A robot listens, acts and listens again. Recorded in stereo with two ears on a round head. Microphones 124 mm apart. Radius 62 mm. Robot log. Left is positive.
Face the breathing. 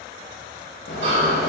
note: The breathing: about 40° right or 140° right.
cmd yaw -40
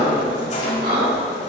note: So it is at 100° right.
cmd yaw -100
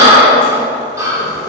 note: The breathing is now 25° right.
cmd yaw -25
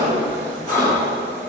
note: The breathing is now 15° left.
cmd yaw +15
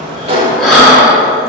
end: Found it: breathing, straight ahead.